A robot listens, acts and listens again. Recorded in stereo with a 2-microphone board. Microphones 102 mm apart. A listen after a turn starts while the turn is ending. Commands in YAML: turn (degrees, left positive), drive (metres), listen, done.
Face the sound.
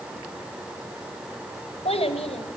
turn: 75
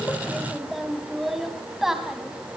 done: "Facing the child speaking."